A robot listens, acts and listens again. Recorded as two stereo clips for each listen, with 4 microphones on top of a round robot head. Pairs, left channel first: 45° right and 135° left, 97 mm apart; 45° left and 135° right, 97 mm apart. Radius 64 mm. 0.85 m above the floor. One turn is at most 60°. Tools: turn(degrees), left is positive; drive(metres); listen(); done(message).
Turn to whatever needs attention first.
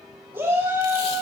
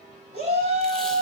turn(degrees=-60)
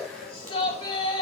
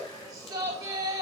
turn(degrees=-60)
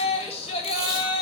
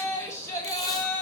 turn(degrees=-15)
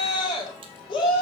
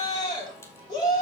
done("Facing the shout, over 4 m away.")